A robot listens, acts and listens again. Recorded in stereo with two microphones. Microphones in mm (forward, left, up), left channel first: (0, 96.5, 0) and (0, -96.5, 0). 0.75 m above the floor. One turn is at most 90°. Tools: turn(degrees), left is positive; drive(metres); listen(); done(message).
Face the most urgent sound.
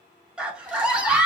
turn(degrees=-30)
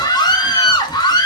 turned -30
turn(degrees=25)
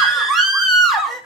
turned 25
done("Facing the scream.")